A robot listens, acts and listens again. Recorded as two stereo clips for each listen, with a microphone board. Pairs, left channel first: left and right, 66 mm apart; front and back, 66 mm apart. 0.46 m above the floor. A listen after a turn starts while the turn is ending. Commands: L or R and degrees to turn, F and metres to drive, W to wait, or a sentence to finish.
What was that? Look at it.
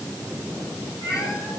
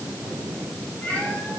L65
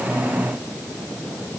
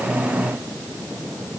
W
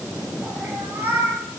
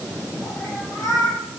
R30
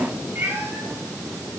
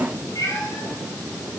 R30
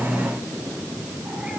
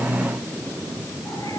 W
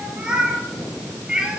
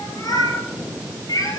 R15
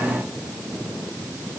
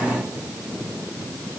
W
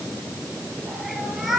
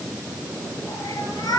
Facing the cat meowing.